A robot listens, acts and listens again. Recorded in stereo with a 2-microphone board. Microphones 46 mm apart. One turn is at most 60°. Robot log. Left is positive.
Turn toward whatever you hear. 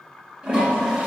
note: The toilet flushing: about 25° right or 155° right.
cmd yaw -25
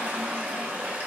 note: So it is at 130° right.
cmd yaw -60
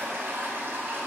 note: The toilet flushing is now 70° right.
cmd yaw -60
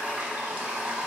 note: The toilet flushing is now 20° right.
cmd yaw -20
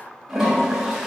end: Facing the toilet flushing.